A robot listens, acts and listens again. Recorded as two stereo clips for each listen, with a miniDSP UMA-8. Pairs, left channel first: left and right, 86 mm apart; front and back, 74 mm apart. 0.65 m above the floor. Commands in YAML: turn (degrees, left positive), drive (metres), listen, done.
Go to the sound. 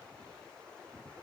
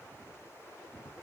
listen: true
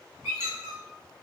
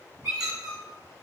turn: -150
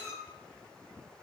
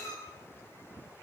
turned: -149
drive: 1.0
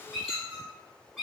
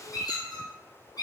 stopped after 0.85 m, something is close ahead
done: "I am next to the squeak."